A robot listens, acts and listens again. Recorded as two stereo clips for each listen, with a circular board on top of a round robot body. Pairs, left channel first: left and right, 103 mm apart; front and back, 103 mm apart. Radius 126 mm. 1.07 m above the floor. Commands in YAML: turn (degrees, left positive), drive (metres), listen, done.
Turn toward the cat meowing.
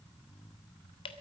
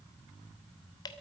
listen: true
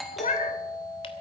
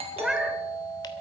turn: 95
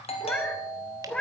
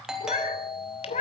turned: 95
turn: 10
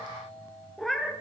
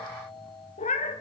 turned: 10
done: "Found it: a cat meowing, straight ahead."